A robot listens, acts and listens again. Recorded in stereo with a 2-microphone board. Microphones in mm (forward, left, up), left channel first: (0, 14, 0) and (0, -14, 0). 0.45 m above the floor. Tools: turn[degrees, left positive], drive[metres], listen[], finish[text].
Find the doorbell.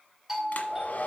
Action: turn[-30]
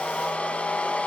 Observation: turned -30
Action: listen[]
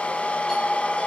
Action: listen[]
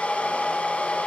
Action: finish[I heard a doorbell, but can't make it out now. It was about 20° left or 140° right.]